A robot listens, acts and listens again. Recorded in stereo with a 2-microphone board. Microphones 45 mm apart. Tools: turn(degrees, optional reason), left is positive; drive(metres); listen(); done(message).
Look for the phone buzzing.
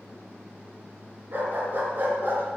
listen()
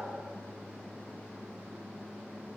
listen()
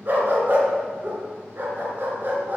done("I can't make out a phone buzzing to turn to.")